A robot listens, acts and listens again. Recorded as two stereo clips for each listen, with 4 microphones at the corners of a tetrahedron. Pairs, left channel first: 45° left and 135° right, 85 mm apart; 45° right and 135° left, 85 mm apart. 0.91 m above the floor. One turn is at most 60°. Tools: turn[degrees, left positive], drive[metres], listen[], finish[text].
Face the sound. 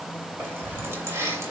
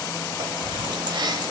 Thought: The keys jangling: 165° left.
Action: turn[60]
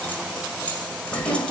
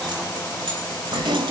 Thought: The keys jangling is now 120° left.
Action: turn[60]
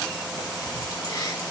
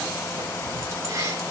Thought: The keys jangling is now 85° left.
Action: turn[60]
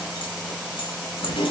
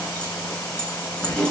Thought: The keys jangling is now 30° left.
Action: turn[30]
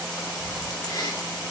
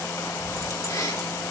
Action: finish[Facing the keys jangling, 2 to 4 m away.]